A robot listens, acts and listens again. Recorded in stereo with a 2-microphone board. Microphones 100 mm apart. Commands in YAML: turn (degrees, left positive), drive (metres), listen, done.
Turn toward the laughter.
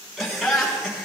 turn: -30
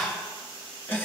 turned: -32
turn: 20
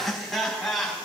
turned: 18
done: "Facing the laughter, over 4 m away."